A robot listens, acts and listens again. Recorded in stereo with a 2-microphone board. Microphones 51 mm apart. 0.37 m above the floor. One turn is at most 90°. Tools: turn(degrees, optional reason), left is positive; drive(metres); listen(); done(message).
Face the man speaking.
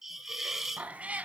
listen()
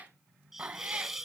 listen()
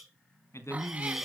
turn(degrees=65, reason="The man speaking: about 65° left or 115° left.")
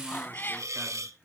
listen()
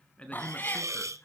turn(degrees=25, reason="So it is at 25° left.")
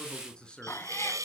turn(degrees=20, reason="The man speaking is now 20° left.")
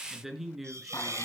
done("Facing the man speaking, over 4 m away.")